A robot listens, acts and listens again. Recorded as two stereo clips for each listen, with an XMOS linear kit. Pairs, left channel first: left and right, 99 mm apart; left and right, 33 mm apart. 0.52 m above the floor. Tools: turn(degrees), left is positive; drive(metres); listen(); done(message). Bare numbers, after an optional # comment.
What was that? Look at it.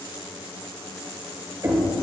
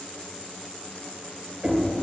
# The knocking: about 35° right or 145° right.
turn(-35)
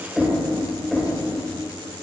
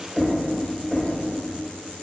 done("Facing the knocking.")